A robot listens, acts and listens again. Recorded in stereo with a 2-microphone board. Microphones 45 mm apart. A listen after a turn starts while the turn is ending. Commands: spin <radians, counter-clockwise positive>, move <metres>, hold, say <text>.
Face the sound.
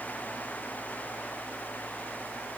hold
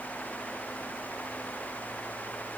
hold
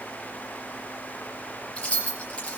spin 0.52
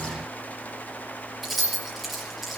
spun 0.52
say Facing the keys jangling.